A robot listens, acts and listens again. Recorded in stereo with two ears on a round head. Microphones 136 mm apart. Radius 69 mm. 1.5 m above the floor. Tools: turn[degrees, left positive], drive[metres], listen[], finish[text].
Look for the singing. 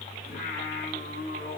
Thought: The singing: about 55° left or 125° left.
Action: turn[55]
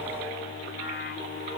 Thought: So it is at 80° left.
Action: turn[80]
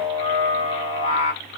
Thought: The singing is now 45° left.
Action: turn[45]
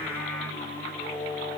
Action: finish[Found it: singing, straight ahead, 1 to 2 m away.]